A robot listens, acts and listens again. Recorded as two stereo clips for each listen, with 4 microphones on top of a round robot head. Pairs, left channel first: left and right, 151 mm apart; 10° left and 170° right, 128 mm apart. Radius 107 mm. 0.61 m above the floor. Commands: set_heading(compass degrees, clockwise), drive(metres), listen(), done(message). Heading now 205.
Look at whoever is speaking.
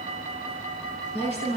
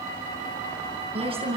set_heading(60)
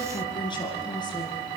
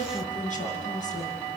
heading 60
set_heading(30)
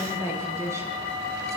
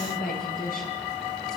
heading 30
set_heading(45)
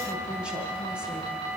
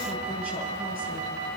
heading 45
listen()
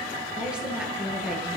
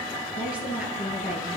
done("Facing the woman speaking.")